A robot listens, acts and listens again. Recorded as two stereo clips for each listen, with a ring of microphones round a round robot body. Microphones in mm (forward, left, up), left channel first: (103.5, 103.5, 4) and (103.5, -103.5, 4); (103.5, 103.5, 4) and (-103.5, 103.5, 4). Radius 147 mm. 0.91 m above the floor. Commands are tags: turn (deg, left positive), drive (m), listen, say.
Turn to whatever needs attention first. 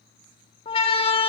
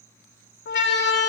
<turn deg="25"/>
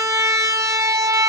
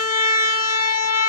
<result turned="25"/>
<turn deg="-15"/>
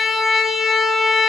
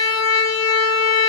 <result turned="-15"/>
<say>Facing the siren, 2 to 4 m away.</say>